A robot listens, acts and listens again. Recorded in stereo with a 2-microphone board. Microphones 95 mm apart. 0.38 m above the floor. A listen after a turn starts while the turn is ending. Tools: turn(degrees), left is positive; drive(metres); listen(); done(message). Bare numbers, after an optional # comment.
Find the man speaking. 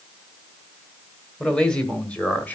# The man speaking: about 15° left or 165° left.
turn(15)
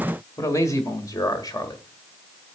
# The man speaking: about 45° left or 135° left.
turn(45)
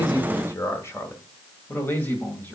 # So it is at 20° left.
turn(20)
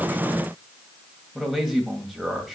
done("Found it: a man speaking, straight ahead, 2 to 4 m away.")